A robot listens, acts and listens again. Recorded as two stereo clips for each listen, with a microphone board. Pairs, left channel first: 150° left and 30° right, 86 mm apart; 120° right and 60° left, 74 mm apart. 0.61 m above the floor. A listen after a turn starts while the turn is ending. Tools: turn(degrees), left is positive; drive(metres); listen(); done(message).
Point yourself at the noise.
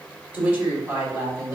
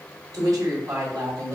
turn(degrees=20)
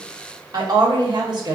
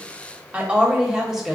turn(degrees=-25)
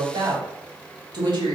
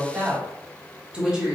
turn(degrees=-20)
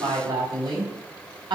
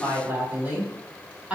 turn(degrees=-15)
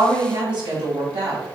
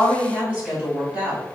turn(degrees=-10)
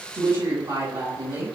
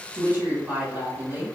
done("Facing the woman speaking.")